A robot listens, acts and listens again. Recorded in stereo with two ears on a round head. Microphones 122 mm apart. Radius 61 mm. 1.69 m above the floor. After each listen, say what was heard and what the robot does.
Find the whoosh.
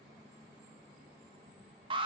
Keep listening.
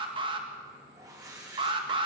The whoosh: about 25° right or 155° right. Turn 25° right.
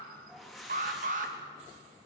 Facing the whoosh.